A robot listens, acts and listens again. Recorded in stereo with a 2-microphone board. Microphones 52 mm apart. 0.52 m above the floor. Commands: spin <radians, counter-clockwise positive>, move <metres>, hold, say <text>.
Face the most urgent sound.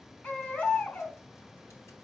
spin 0.44
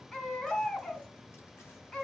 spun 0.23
spin 0.26
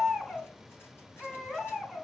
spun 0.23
say Found it: a baby crying, straight ahead, 2 to 4 m away.